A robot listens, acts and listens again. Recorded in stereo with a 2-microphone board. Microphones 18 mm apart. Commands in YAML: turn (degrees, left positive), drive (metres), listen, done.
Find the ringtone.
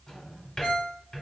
turn: 35
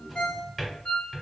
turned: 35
turn: 105
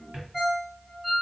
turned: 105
done: "Found it: a ringtone, straight ahead."